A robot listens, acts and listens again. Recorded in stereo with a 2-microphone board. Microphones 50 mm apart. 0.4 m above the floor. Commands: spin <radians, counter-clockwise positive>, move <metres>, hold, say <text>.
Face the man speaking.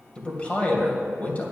spin 0.61
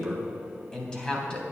spin 0.35
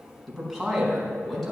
say Facing the man speaking, over 4 m away.